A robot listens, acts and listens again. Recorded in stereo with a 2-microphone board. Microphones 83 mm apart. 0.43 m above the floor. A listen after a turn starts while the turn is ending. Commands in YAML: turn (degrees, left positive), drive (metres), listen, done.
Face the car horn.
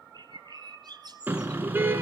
turn: -20
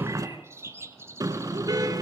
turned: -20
turn: -135
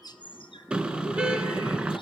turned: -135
turn: -15
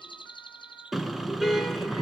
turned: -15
done: "Facing the car horn."